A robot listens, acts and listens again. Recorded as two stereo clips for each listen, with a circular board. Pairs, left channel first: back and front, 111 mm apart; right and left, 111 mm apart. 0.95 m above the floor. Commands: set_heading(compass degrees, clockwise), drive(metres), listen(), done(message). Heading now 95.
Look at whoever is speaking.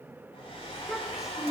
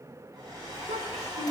set_heading(5)
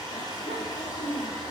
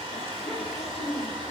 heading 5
done("Facing the child speaking, 2 to 4 m away.")